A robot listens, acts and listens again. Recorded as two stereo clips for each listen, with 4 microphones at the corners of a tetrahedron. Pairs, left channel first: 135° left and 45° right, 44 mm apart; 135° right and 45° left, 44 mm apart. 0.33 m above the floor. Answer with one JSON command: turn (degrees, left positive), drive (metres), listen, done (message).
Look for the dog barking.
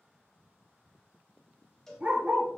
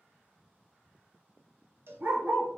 {"turn": 10}
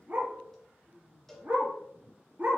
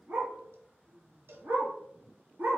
{"done": "Facing the dog barking, 1 to 2 m away."}